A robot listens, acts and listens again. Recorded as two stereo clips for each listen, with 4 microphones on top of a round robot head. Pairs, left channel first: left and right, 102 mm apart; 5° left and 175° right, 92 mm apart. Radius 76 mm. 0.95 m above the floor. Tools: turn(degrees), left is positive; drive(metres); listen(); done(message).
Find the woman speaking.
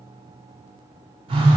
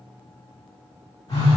listen()
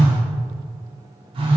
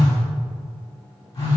listen()
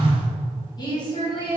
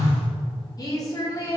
turn(degrees=60)
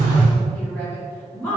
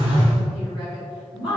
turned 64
turn(degrees=15)
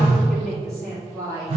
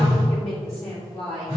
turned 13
done("Found it: a woman speaking, straight ahead, 2 to 4 m away.")